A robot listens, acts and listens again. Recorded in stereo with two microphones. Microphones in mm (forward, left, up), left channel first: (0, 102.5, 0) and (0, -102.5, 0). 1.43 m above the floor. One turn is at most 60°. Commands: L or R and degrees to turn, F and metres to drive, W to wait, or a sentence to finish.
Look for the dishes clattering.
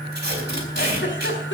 W
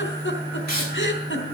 W
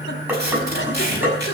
R30
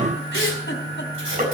W
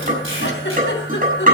R60
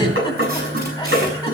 R60
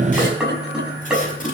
Found it: dishes clattering, straight ahead.